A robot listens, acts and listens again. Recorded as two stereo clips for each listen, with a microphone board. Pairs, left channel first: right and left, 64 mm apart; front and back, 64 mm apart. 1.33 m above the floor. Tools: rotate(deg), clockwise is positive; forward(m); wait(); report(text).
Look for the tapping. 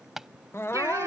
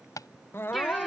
report("Facing the tapping.")